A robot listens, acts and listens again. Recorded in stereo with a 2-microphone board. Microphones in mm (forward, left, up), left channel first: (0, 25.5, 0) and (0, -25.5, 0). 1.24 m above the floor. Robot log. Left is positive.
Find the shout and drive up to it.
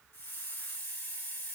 cmd idle
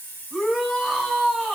cmd yaw -30
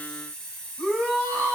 note: So it is at 30° left.
cmd yaw +30
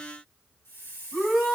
cmd fwd 1.0
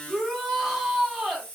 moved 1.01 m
note: The shout is now 10° right.
cmd yaw -10
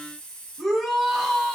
cmd fwd 1.0
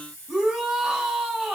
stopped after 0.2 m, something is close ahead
note: The shout is now 15° right.
cmd yaw -15
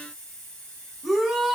end: I am next to the shout.